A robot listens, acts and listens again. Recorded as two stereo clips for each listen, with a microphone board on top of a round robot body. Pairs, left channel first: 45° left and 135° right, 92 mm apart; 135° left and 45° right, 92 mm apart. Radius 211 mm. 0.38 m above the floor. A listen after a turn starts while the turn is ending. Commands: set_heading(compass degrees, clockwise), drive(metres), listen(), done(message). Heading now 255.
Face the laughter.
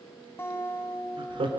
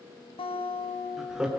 set_heading(20)
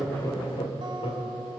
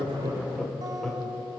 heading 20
set_heading(325)
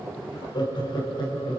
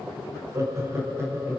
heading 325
set_heading(310)
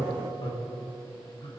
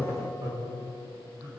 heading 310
set_heading(300)
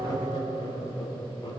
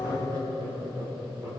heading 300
done("Found it: laughter, straight ahead.")